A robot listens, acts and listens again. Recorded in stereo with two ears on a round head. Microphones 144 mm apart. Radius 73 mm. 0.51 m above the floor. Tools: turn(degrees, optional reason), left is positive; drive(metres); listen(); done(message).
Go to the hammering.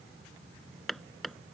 turn(degrees=30)
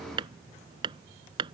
turn(degrees=-30, reason="So it is at 30° right.")
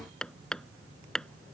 drive(metres=1.0)
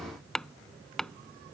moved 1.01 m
drive(metres=1.0)
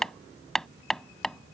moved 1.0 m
drive(metres=1.0)
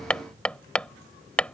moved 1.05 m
turn(degrees=10, reason="The hammering is now 10° left.")
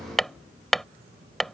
drive(metres=1.0)
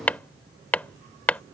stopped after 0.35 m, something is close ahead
turn(degrees=10, reason="The hammering is now 10° left.")
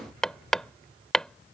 done("I am next to the hammering.")